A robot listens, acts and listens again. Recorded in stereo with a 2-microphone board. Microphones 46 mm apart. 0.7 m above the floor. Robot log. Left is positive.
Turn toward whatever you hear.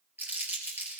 note: The crumpling: about 45° right or 135° right.
cmd yaw -45
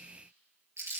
note: So it is at 90° right.
cmd yaw -90
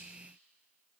cmd idle
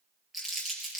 end: Facing the crumpling, 2 to 4 m away.